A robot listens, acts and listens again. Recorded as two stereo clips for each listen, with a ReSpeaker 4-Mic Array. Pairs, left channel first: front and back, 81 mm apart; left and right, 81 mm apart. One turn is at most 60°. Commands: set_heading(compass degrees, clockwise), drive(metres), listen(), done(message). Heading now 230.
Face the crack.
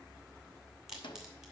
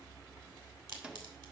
set_heading(290)
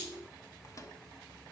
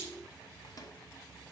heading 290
set_heading(325)
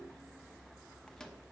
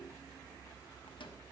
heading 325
done("I heard a crack from this way, but can't make it out now.")